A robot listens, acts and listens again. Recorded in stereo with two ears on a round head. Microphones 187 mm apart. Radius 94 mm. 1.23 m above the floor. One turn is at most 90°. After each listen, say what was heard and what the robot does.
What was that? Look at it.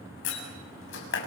The door slam: about 60° left or 120° left. Turn 60° left.
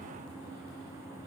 Keep listening.
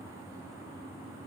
I heard a door slam, but can't make it out now. It was about straight ahead or 60° left.